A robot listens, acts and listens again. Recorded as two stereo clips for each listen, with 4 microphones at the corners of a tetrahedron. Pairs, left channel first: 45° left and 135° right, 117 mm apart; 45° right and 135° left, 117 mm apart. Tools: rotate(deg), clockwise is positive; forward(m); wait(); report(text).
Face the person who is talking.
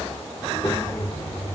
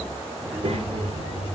rotate(-120)
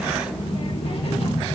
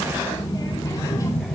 rotate(-15)
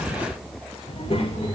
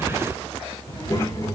rotate(-15)
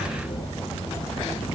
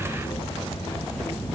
report("Facing the child speaking, 2 to 4 m away.")